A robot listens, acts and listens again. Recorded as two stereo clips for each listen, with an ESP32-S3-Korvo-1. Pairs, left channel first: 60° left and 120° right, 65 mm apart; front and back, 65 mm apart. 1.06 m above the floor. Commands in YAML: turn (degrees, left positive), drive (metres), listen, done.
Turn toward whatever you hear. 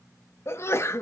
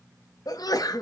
turn: 15
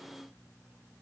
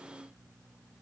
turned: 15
done: "I heard a sneeze from this way, but can't make it out now."